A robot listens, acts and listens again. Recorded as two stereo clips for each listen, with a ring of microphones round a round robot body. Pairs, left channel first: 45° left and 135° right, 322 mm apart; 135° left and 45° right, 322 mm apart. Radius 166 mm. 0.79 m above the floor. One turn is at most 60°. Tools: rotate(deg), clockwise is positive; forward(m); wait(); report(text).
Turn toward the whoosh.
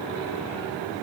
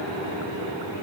wait()
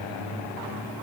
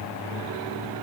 wait()
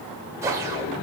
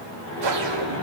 rotate(55)
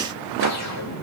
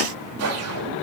report("Found it: a whoosh, straight ahead, 1 to 2 m away.")